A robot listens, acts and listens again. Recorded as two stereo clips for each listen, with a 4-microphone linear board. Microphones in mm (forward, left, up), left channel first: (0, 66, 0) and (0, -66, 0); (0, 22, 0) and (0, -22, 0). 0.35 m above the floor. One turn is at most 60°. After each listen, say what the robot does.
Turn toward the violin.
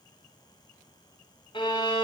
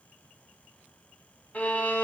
Turn 40° left.
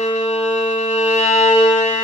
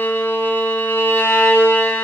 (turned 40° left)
Turn 60° left.
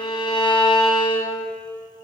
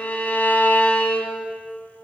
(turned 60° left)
Turn 45° left.
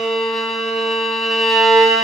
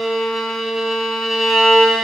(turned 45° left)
Found it: a violin, straight ahead, 1 to 2 m away.